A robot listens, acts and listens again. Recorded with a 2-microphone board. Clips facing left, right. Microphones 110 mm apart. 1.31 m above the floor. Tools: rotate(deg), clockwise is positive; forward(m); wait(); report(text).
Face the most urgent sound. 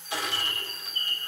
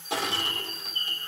wait()
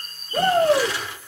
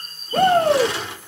rotate(55)
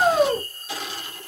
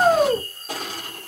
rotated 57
report("Found it: a shout, straight ahead, 1 to 2 m away.")